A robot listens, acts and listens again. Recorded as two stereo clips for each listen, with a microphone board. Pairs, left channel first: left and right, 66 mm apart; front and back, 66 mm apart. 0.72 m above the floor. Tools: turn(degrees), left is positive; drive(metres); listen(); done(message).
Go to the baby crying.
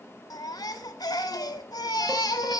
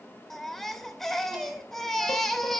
turn(degrees=85)
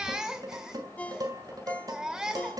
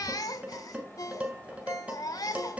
turn(degrees=-10)
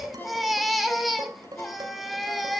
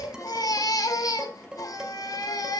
drive(metres=1.0)
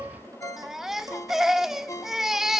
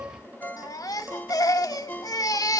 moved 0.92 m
drive(metres=1.0)
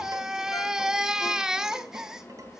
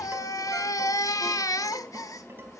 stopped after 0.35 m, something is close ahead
turn(degrees=-10)
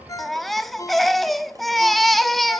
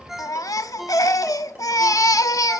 done("Arrived at the baby crying, straight ahead.")